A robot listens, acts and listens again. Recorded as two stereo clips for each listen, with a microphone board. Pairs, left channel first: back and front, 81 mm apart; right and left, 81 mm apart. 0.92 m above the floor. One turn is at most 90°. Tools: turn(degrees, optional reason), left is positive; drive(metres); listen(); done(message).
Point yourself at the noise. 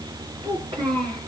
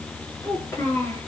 turn(degrees=-30, reason="The child speaking: 30° right.")
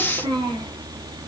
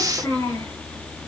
turn(degrees=-25, reason="The child speaking is now 25° right.")
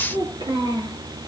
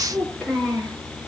done("Found it: a child speaking, straight ahead, over 4 m away.")